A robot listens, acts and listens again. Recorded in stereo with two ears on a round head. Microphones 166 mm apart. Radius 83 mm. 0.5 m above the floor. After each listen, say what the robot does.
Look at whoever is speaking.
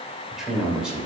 Turn 30° right.
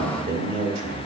Turn 145° right.
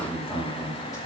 Turn 20° left.
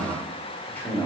Turn 10° left.
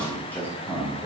Turn 15° left.
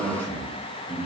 Turn 10° left.
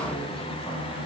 Facing the man speaking.